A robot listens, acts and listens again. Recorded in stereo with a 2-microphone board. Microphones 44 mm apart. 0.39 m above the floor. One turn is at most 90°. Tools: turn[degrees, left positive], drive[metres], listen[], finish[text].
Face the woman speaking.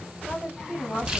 Thought: The woman speaking: about 20° left or 160° left.
Action: turn[20]
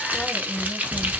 Action: listen[]
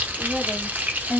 Action: turn[30]
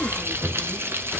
Action: listen[]
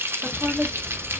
Thought: So it is at 10° right.
Action: turn[-10]
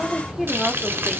Action: finish[Found it: a woman speaking, straight ahead.]